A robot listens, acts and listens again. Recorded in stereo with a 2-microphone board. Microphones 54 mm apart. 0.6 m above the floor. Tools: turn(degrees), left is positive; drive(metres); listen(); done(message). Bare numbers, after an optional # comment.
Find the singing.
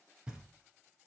listen()
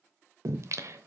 # The singing: about 65° right or 115° right.
turn(-65)
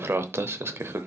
# So it is at 50° right.
turn(-50)
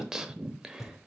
# The singing is now 10° right.
turn(-10)
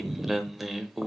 done("Found it: singing, straight ahead.")